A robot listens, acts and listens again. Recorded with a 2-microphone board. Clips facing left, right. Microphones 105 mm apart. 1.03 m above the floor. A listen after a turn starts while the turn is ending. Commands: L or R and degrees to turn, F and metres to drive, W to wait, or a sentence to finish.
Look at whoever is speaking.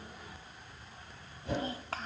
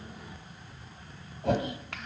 L35
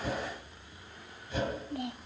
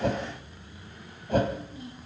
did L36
L105
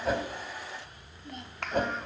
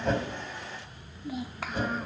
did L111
Facing the child speaking.